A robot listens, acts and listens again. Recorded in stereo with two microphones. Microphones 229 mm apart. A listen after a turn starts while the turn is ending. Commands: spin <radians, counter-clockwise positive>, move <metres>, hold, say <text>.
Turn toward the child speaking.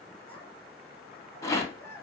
spin 0.52
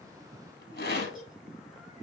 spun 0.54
spin -0.35
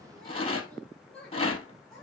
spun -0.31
say Facing the child speaking, over 4 m away.